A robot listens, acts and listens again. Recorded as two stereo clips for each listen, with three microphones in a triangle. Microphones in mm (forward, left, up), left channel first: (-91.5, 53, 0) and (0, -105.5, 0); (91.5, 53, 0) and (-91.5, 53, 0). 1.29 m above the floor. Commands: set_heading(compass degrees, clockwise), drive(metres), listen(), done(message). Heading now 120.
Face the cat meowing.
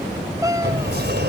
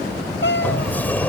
set_heading(105)
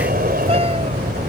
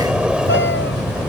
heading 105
listen()
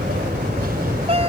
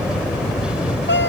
done("Facing the cat meowing.")